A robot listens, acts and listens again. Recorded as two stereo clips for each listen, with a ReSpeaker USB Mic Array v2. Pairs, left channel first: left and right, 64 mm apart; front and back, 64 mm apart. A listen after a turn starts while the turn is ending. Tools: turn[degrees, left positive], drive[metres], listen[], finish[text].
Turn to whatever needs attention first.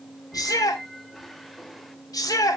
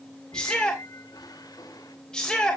Thought: The shout: 80° left.
Action: turn[80]
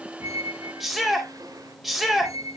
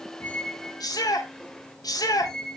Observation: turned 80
Action: finish[Found it: a shout, straight ahead.]